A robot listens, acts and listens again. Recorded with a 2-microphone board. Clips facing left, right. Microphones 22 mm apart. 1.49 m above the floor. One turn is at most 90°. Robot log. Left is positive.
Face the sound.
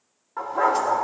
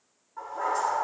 note: The dog barking: about 55° left or 125° left.
cmd yaw +55
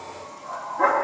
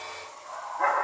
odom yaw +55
note: So it is at 20° left.
cmd yaw +20
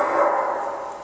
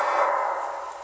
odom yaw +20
end: Found it: a dog barking, straight ahead.